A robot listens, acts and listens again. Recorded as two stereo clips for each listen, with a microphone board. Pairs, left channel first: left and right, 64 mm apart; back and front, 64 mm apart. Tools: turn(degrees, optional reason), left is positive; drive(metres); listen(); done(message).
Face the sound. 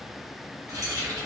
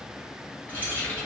turn(degrees=-115, reason="The keys jangling: 115° right.")
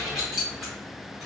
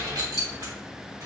done("Facing the keys jangling, 2 to 4 m away.")